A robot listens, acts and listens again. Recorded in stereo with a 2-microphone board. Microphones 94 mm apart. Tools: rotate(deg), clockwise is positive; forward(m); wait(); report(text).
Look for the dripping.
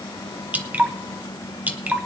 rotate(20)
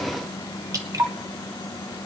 rotate(140)
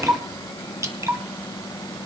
rotate(35)
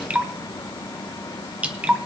rotate(15)
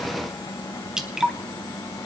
report("Facing the dripping.")